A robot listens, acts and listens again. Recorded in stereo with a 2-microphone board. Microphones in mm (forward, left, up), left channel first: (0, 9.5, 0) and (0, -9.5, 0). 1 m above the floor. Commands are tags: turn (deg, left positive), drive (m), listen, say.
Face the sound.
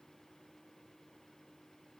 <listen/>
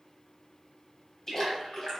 <turn deg="30"/>
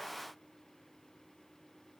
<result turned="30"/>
<listen/>
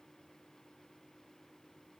<say>I heard a splash, but can't make it out now. It was about straight ahead or 120° left.</say>